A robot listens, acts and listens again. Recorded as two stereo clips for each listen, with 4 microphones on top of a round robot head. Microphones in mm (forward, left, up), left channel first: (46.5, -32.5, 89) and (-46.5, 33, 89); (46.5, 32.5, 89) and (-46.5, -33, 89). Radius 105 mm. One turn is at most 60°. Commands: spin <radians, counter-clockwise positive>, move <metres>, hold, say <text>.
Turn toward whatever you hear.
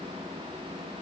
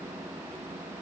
hold
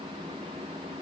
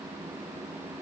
hold
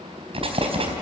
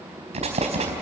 spin -1.05
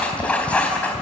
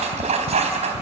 spin -1.05
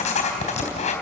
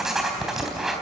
spin -1.05
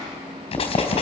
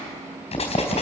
say Found it: writing, straight ahead.